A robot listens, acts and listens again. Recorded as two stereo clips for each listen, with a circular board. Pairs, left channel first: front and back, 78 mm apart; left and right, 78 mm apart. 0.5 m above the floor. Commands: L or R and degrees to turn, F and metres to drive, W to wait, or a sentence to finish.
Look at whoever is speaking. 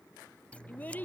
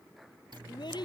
L70
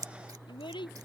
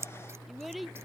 Found it: a child speaking, straight ahead.